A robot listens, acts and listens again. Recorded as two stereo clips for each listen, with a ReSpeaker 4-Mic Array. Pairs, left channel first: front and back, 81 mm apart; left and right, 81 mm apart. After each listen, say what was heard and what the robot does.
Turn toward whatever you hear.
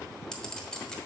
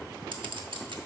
The clink: 80° right. Turn 80° right.
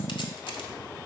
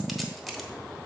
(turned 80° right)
Keep listening.
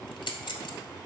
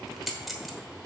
Facing the clink, 1 to 2 m away.